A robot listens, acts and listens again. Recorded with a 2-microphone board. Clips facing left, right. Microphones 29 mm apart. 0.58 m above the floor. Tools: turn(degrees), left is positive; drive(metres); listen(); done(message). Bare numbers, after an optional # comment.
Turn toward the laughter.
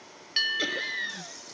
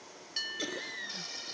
# The laughter: about 35° left or 145° left.
turn(35)
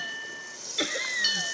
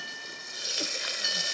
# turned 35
# So it is at 110° left.
turn(110)
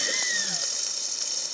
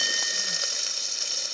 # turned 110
listen()
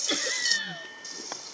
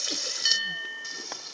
# The laughter is now 55° left.
turn(55)
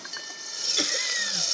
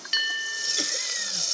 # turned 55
# The laughter is now 20° left.
turn(20)
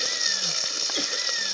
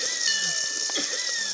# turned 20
done("Facing the laughter.")